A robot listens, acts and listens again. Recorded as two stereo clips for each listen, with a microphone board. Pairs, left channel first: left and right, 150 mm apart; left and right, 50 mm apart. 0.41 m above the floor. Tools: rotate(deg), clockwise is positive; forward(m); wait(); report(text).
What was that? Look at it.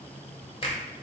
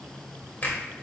rotate(-40)
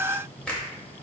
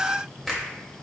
rotate(-10)
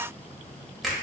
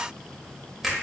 report("Found it: a finger snap, straight ahead.")